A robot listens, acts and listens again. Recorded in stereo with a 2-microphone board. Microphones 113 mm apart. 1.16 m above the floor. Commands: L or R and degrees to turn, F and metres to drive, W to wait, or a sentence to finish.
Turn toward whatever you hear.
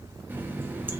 R15
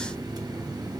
R145
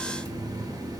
R35
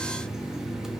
Facing the running tap.